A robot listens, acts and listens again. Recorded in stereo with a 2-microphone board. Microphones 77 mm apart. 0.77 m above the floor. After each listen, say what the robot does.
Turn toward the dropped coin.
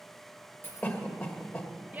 Turn 25° left.
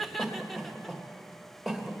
Keep listening.
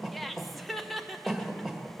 I heard a dropped coin, but can't make it out now. It was about straight ahead or 130° left.